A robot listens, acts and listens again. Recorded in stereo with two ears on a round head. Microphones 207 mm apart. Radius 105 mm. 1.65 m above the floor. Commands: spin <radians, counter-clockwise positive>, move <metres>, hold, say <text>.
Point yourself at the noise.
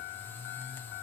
hold
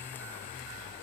hold
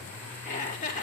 spin 0.61
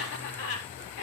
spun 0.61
spin 1.83
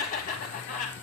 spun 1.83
spin 0.52
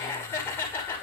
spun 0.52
spin 0.17
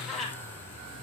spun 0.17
say Found it: laughter, straight ahead.